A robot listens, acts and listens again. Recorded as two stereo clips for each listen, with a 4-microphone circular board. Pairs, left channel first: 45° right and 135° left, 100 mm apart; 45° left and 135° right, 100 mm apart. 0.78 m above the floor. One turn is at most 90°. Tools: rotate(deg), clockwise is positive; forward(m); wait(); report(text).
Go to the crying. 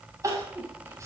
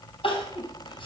rotate(-75)
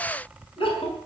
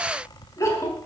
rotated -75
rotate(15)
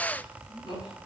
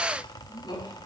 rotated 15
forward(1.0)
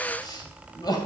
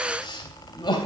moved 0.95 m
forward(1.0)
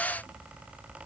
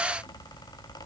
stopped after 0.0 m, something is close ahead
wait()
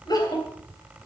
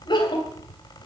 report("Blocked. The crying is further on, straight ahead.")